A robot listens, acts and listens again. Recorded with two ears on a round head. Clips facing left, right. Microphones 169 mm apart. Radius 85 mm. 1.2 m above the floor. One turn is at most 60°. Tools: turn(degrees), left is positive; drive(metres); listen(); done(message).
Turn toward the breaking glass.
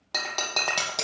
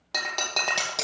turn(degrees=30)
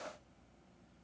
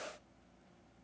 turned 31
listen()
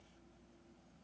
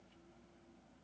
done("I heard breaking glass, but can't make it out now. It was about 30° right or 150° left.")